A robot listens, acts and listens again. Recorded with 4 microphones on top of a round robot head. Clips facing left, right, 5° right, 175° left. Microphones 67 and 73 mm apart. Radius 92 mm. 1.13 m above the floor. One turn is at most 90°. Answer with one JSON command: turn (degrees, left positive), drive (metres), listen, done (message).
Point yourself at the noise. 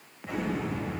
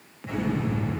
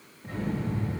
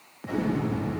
{"turn": 90}
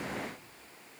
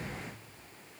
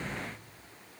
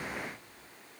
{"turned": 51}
{"turn": 90}
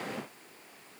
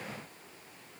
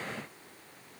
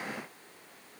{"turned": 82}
{"turn": 45}
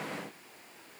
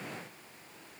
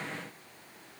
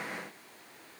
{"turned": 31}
{"turn": 15}
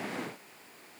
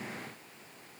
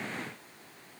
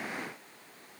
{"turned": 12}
{"done": "Facing where the explosion came from. I can't hear it now."}